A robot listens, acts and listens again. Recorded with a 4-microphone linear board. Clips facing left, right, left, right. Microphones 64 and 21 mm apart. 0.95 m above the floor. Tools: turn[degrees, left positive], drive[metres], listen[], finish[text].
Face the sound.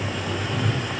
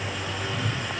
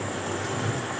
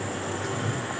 Thought: The whoosh: about 45° left or 135° left.
Action: turn[45]
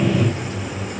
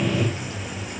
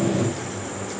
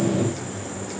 Thought: So it is at 95° left.
Action: turn[95]
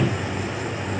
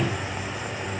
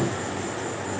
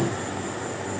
Action: listen[]
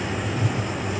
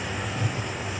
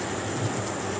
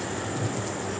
Thought: The whoosh is now 15° left.
Action: turn[15]
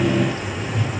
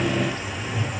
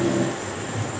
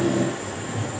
Action: finish[Facing the whoosh, over 4 m away.]